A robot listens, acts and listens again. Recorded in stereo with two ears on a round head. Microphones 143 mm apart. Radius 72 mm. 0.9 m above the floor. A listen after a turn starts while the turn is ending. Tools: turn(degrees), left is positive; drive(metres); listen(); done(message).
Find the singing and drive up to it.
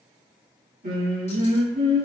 turn(degrees=-60)
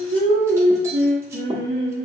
turn(degrees=-55)
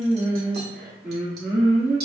drive(metres=1.0)
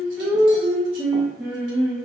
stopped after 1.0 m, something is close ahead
done("Arrived at the singing, straight ahead.")